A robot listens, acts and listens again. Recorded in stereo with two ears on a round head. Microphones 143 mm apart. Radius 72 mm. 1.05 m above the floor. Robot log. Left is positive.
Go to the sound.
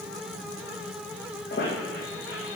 note: The squeak: about 65° left or 115° left.
cmd yaw +65
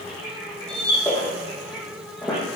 cmd fwd 1.0
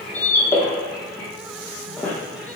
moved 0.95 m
note: The squeak is now 15° left.
cmd yaw +15
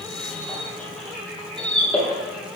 cmd fwd 1.0
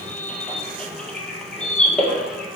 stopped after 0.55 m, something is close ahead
note: The squeak is now 10° left.
cmd yaw +10
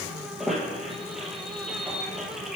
end: Arrived at the squeak, straight ahead.